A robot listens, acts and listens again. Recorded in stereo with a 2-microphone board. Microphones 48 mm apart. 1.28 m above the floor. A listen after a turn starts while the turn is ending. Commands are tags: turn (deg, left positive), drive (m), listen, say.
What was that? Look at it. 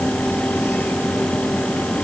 <listen/>
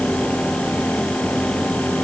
<listen/>
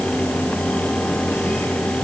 <say>I can't make out anything to turn to.</say>